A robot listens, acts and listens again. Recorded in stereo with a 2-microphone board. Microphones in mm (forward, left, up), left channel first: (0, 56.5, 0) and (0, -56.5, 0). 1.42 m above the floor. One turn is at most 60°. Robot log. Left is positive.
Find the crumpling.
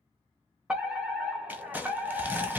cmd yaw -30
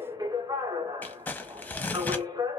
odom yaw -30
note: So it is at 15° left.
cmd yaw +15
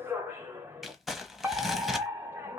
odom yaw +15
end: Found it: crumpling, straight ahead, under 1 m away.